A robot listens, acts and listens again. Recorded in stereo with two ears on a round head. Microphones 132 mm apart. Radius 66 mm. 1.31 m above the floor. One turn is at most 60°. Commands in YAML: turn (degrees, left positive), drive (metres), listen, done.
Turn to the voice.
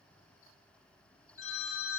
listen: true
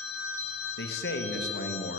turn: 60
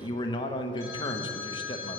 turn: 30
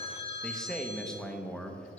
done: "Facing the man speaking."